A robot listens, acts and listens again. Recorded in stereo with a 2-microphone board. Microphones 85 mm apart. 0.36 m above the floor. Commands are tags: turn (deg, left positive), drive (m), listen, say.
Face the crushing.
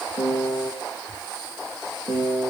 <listen/>
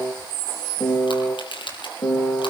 <turn deg="70"/>
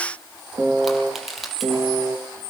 <say>Found it: crushing, straight ahead, over 4 m away.</say>